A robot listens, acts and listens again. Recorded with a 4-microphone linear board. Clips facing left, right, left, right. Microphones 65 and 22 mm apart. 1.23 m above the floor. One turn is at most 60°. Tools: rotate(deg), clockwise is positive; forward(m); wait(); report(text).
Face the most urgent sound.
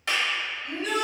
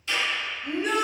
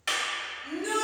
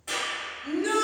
rotate(35)
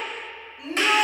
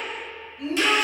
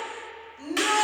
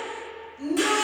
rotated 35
report("Found it: a shout, straight ahead, 1 to 2 m away.")